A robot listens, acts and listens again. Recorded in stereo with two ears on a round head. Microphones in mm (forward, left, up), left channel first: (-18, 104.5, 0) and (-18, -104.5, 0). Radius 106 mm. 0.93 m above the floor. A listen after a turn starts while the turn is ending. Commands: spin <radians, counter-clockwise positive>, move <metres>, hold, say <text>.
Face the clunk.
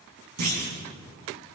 spin -1.57
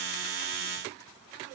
say Facing where the clunk came from. I can't hear it now.